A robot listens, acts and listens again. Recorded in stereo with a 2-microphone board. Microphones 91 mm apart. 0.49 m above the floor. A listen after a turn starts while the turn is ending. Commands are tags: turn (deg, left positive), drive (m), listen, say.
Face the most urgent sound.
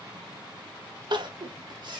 <turn deg="-55"/>
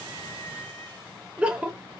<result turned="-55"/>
<turn deg="-15"/>
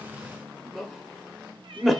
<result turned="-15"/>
<say>Facing the crying, 1 to 2 m away.</say>